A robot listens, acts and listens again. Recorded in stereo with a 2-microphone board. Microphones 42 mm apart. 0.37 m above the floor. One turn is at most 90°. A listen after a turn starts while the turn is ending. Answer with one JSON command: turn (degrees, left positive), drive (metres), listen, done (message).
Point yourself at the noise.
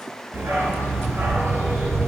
{"turn": -90}
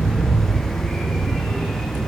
{"done": "Facing the dog barking."}